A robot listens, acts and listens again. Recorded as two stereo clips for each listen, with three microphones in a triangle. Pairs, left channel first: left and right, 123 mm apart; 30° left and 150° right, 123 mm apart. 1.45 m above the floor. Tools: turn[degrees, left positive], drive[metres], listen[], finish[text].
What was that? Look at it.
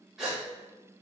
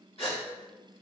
Action: finish[Found it: a gasp, straight ahead.]